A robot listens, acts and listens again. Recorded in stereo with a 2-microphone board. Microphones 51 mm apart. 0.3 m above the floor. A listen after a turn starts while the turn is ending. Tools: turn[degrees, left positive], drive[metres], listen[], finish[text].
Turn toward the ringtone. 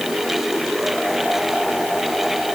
Action: listen[]
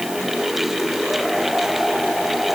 Action: listen[]
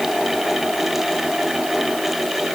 Action: finish[I can't make out a ringtone to turn to.]